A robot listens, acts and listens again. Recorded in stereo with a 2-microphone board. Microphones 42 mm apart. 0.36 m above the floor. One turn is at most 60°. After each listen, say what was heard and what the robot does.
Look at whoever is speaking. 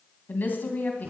The woman speaking: about 45° left or 135° left. Turn 45° left.
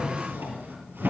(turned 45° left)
Keep listening.
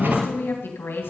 So it is at 90° left. Turn 60° left.
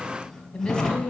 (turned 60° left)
The woman speaking is now 25° left. Turn 25° left.
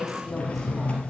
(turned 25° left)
Facing the woman speaking, 2 to 4 m away.